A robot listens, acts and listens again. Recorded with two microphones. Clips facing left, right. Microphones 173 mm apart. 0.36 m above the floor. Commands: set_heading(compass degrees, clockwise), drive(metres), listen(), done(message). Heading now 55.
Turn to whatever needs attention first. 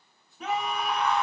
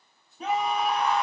set_heading(85)
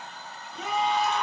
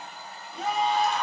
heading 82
set_heading(202)
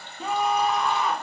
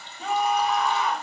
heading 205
done("Found it: a scream, straight ahead, 1 to 2 m away.")